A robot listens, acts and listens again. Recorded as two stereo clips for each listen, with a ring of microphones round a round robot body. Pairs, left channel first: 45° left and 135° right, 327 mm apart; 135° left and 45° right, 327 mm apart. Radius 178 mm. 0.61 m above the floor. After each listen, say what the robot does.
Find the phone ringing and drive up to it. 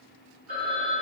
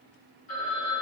Turn 140° left.
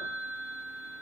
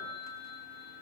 Turn 30° left.
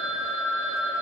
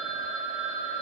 Drive 1.0 m forward.
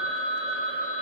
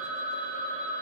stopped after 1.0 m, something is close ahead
Turn 15° right.
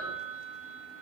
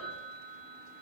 Arrived at the phone ringing, straight ahead.